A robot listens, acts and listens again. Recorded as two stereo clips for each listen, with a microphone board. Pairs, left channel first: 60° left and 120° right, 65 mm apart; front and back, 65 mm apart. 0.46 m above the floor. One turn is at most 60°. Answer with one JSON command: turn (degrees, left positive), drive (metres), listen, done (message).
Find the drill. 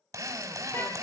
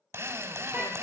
{"turn": -60}
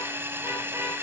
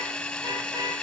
{"turn": -60}
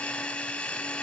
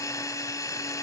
{"turn": -15}
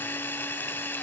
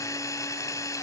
{"done": "Found it: a drill, straight ahead, 1 to 2 m away."}